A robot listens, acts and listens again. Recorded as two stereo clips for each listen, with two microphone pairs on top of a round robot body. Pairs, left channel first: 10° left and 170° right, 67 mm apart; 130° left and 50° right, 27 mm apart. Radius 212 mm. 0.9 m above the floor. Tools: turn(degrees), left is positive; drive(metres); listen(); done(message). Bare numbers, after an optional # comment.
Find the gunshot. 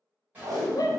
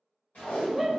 # The gunshot: 120° left.
turn(120)
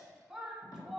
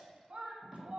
done("I heard a gunshot from this way, but can't make it out now.")